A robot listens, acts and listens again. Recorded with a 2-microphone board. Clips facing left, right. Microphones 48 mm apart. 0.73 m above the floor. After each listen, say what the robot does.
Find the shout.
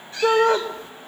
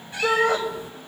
Turn 40° left.
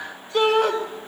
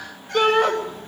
Found it: a shout, straight ahead.